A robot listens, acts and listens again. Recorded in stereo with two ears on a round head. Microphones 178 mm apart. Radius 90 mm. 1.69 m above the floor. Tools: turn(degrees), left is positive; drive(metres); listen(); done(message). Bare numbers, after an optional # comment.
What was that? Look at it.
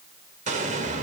# The explosion: about 40° right or 140° right.
turn(-40)
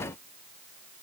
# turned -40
listen()
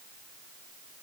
done("I heard an explosion, but can't make it out now. It was about straight ahead or 100° right.")